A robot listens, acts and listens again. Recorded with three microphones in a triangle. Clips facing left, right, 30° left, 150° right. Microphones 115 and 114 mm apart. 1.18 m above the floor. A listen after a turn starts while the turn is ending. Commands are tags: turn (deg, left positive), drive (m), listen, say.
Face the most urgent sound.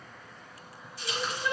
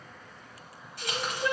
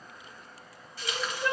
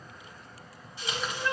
<turn deg="-35"/>
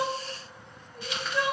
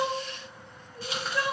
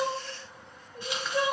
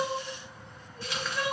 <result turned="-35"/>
<say>Found it: crying, straight ahead.</say>